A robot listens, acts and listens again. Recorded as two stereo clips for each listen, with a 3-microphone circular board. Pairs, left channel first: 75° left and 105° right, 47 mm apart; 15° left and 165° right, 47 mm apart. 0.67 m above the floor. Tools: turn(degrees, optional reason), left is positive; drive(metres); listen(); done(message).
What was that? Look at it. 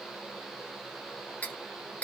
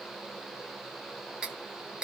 turn(degrees=125, reason="The cutlery clinking: 125° left.")
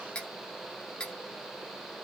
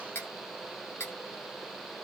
done("Facing the cutlery clinking.")